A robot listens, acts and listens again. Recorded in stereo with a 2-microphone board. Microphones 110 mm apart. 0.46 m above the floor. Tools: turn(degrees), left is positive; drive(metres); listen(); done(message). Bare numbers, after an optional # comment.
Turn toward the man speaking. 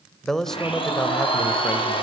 turn(30)
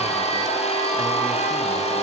listen()
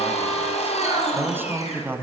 # So it is at 20° right.
turn(-20)
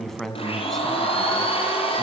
done("Found it: a man speaking, straight ahead.")